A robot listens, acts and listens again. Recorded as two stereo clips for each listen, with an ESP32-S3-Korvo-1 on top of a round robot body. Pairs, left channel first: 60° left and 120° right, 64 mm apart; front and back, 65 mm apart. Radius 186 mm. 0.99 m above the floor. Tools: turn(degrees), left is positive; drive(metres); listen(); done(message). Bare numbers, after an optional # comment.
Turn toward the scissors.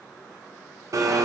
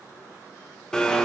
listen()
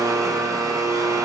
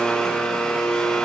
listen()
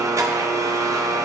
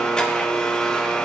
done("I can't make out scissors to turn to.")